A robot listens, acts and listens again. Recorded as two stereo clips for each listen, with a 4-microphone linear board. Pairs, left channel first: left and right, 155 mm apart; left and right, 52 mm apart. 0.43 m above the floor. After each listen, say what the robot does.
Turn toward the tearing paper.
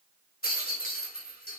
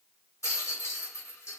Keep listening.
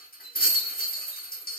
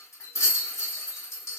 Keep listening.
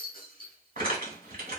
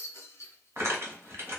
Turn 60° right.
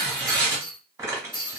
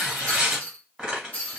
Turn 20° right.
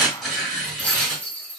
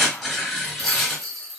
Facing the tearing paper.